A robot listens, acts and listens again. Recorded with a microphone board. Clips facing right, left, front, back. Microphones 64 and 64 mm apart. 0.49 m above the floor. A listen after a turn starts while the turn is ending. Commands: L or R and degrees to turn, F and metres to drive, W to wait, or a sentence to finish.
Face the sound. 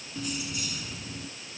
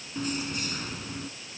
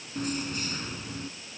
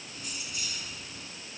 L50
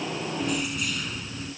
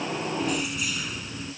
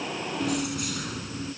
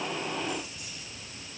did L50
L10
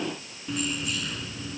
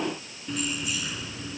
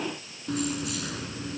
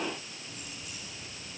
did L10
L10
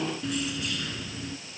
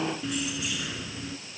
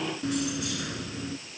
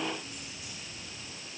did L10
L10
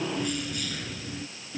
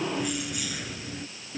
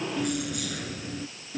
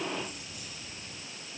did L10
L10
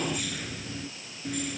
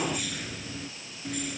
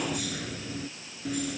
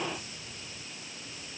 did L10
Found it: keys jangling, straight ahead.